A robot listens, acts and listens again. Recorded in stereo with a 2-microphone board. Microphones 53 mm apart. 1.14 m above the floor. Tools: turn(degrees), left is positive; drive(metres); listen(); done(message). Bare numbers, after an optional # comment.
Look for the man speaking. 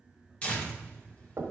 listen()
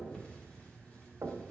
listen()
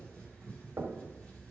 done("I can't make out a man speaking to turn to.")